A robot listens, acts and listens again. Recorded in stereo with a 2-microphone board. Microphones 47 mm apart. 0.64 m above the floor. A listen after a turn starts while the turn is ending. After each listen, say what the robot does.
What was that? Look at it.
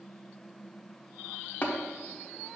Turn 40° left.
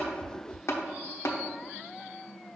Turn 95° left.
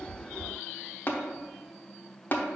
Turn 45° left.
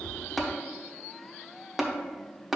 Facing the tapping, under 1 m away.